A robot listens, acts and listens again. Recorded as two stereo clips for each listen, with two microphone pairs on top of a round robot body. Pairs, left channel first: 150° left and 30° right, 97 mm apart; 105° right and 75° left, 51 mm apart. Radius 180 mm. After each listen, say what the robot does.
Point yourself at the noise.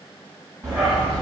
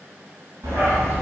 Turn 60° left.
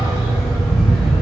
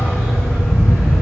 Turn 65° left.
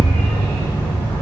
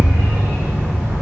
Turn 40° left.
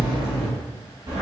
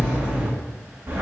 Turn 20° left.
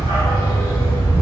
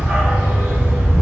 Found it: a dog barking, straight ahead, 2 to 4 m away.